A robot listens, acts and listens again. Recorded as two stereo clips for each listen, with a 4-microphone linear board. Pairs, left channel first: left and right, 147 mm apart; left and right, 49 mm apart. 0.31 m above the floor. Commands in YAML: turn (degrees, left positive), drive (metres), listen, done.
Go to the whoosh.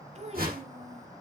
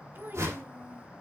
turn: -90
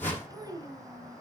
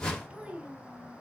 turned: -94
turn: 15
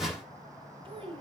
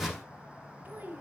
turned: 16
drive: 1.0
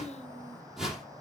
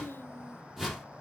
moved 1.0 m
drive: 1.0
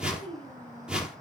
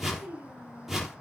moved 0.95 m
drive: 1.0
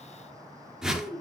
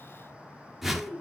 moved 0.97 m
drive: 1.0
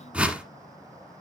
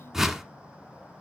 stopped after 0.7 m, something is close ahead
turn: -10
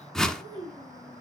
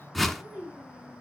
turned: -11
done: "I am next to the whoosh."